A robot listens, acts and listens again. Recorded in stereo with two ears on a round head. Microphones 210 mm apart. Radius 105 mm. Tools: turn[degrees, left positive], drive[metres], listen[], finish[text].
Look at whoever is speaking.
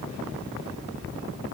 Action: listen[]
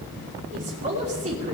Thought: The woman speaking: about 30° right or 150° right.
Action: turn[-30]
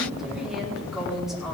Action: finish[Found it: a woman speaking, straight ahead.]